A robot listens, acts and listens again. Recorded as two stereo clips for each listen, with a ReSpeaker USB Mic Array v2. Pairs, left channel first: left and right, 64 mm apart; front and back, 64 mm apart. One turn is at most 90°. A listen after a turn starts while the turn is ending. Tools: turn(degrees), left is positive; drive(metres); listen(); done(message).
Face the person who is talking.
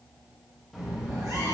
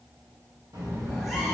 turn(degrees=-90)
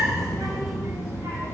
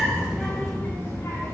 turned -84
turn(degrees=-45)
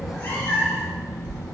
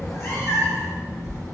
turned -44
turn(degrees=25)
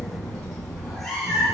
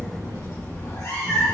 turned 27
turn(degrees=10)
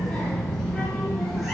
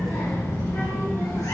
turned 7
done("Facing the child speaking, 2 to 4 m away.")